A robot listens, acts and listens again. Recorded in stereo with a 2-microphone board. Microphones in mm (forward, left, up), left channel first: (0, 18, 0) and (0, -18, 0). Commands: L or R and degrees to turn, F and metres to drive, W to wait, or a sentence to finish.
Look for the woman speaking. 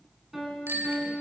W
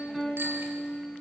W
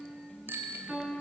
I can't make out a woman speaking, only a piano and a bicycle bell.